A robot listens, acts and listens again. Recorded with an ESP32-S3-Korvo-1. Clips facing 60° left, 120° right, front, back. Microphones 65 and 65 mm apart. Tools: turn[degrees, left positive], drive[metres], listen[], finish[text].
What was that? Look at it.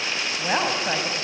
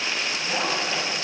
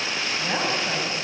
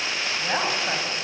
Thought: The woman speaking: 105° left.
Action: turn[105]
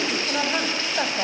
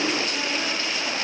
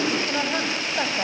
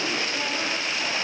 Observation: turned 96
Thought: The woman speaking is now 35° left.
Action: turn[35]
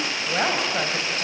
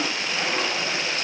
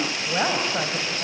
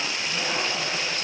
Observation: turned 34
Thought: The woman speaking is now 15° left.
Action: turn[15]
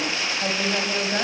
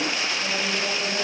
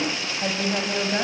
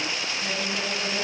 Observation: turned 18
Thought: The woman speaking is now 10° left.
Action: turn[10]
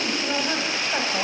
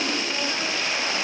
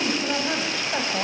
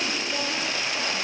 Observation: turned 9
Action: finish[Facing the woman speaking, over 4 m away.]